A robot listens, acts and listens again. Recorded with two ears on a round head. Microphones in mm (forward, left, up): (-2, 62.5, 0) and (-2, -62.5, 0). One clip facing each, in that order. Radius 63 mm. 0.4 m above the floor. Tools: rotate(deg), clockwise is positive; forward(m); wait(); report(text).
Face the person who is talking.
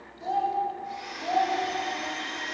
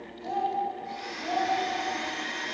rotate(-45)
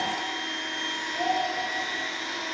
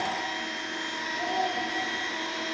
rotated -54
rotate(-75)
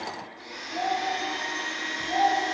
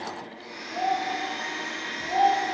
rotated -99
rotate(20)
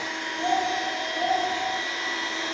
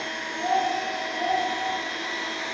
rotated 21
report("Facing the child speaking, 1 to 2 m away.")